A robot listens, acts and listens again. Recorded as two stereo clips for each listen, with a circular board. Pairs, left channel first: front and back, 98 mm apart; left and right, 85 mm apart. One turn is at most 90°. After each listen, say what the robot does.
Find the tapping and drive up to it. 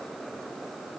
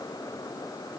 Keep listening.
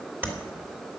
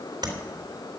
Turn 90° right.
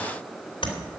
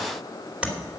Turn 15° right.
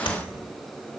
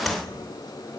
Keep listening.
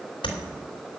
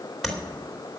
Drive 1.0 m forward.
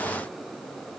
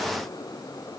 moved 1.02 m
Keep listening.
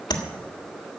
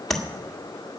Drive 1.0 m forward.
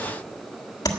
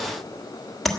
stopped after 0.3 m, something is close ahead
I am next to the tapping.